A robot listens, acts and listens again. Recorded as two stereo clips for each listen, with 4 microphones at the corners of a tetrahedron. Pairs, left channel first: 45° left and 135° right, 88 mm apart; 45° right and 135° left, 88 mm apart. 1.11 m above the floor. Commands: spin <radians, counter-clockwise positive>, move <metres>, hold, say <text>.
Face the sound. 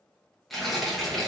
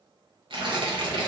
spin 2.36
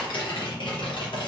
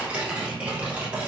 spin 1.05
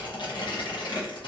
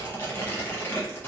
spin 0.35
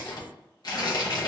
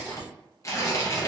say Found it: tearing paper, straight ahead.